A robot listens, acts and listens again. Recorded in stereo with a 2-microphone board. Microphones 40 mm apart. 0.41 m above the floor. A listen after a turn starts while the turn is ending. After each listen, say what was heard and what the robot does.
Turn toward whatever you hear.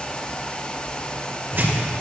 The tearing paper: about 65° right or 115° right. Turn 65° right.
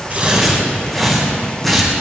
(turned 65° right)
Found it: tearing paper, straight ahead.